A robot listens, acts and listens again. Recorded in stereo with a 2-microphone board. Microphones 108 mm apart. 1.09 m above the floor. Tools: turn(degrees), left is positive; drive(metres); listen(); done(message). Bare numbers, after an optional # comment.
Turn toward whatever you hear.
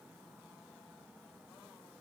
listen()
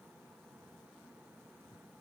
listen()
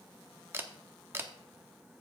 # The camera shutter: about 20° right or 160° right.
turn(-20)
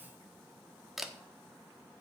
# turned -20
done("Found it: a camera shutter, straight ahead.")